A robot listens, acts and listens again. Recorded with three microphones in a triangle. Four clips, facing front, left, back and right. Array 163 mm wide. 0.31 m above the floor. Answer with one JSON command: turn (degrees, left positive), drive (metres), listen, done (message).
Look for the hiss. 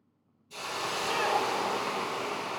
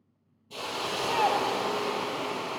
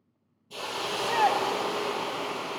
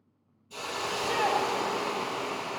{"turn": 125}
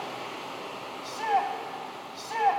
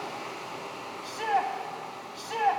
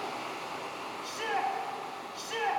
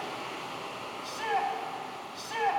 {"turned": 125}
{"turn": -10}
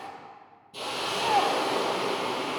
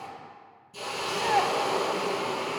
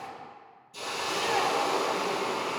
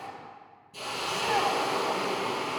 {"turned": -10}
{"done": "Found it: a hiss, straight ahead."}